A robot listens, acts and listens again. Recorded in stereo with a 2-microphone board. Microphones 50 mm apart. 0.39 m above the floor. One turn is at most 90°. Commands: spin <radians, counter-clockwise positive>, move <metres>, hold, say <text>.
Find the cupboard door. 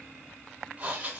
hold
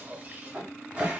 spin -0.35
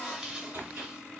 spin -1.57
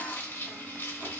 spin -0.87
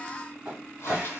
spin -0.52
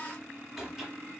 say Found it: a cupboard door, straight ahead.